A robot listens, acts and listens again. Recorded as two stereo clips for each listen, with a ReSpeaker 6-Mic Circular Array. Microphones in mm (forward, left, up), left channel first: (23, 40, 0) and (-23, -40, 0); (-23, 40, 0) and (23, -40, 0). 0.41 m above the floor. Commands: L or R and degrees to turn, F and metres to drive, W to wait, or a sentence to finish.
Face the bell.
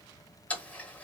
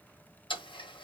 W
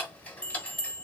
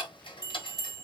R15
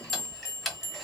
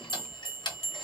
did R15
Found it: a bell, straight ahead.